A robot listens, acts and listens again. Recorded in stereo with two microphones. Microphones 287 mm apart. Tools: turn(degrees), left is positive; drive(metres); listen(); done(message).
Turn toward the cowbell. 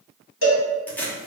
turn(degrees=45)
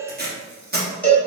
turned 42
done("Found it: a cowbell, straight ahead, under 1 m away.")